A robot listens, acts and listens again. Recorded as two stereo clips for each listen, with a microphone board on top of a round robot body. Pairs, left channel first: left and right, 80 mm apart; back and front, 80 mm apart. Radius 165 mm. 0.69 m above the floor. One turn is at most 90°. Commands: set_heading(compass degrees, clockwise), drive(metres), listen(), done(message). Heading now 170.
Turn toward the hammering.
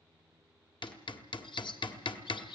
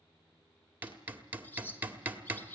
set_heading(105)
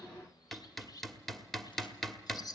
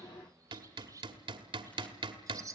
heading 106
done("Found it: hammering, straight ahead, 1 to 2 m away.")